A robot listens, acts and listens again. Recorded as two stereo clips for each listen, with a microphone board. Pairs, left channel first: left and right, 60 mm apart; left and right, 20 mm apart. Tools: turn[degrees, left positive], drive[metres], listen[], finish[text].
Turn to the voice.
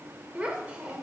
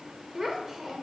Thought: The child speaking: about 20° right or 160° right.
Action: turn[-20]
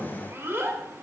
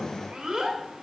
Thought: So it is at 140° right.
Action: turn[-140]
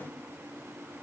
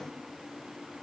Action: listen[]
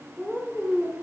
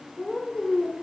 Action: finish[Found it: a child speaking, straight ahead, 1 to 2 m away.]